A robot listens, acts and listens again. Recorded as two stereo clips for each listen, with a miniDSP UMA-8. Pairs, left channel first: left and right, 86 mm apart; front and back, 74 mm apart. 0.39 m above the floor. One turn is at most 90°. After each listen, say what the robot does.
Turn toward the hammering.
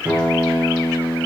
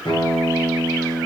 Keep listening.
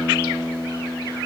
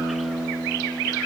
Keep listening.
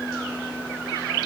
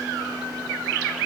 I can't make out hammering to turn to.